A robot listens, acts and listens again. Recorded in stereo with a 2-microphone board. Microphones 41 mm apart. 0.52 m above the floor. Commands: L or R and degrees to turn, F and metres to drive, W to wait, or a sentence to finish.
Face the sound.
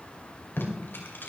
L55
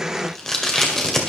L10
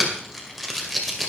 Facing the tape being pulled.